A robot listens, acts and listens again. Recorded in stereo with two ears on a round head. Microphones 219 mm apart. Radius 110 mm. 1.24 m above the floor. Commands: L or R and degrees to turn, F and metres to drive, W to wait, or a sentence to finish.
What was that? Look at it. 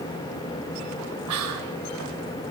R90
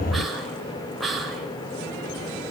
Facing the whispering.